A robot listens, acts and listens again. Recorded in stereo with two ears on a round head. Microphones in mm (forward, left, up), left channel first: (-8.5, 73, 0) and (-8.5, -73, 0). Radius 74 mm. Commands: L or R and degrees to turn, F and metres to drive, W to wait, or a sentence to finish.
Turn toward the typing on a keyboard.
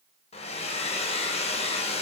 W
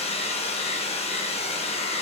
W
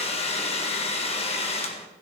I can't make out typing on a keyboard, only a hair dryer.